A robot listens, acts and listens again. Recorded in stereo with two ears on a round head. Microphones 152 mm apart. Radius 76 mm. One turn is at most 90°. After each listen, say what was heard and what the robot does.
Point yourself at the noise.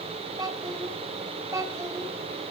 The child speaking: about 20° right or 160° right. Turn 20° right.
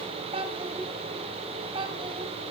The child speaking: about 30° right or 150° right. Turn 30° right.
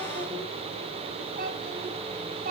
So it is at 125° right. Turn 90° right.
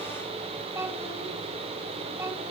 The child speaking is now 15° right. Turn 15° right.
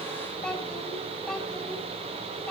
Found it: a child speaking, straight ahead.